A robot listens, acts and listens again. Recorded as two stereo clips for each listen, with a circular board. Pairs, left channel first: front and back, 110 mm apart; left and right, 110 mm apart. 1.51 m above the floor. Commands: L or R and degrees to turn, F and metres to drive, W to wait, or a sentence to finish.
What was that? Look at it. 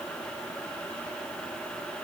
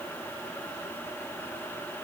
W
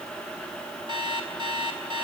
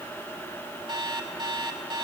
R135
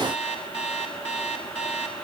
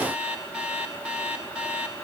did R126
R10
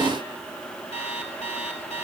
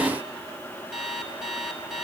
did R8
Facing the alarm clock, over 4 m away.